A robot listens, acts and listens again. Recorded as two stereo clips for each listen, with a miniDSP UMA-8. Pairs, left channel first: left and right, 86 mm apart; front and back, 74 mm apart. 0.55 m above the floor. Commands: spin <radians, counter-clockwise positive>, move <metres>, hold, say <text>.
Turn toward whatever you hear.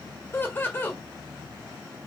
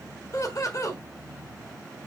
spin 0.52
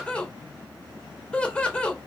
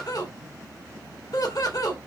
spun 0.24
spin 0.26
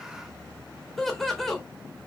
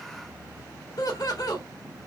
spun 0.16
say Facing the laughter.